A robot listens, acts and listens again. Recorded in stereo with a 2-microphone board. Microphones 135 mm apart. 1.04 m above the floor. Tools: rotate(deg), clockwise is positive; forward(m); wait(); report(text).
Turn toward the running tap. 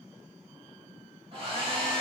wait()
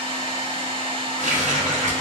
rotate(65)
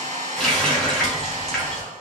report("Facing the running tap.")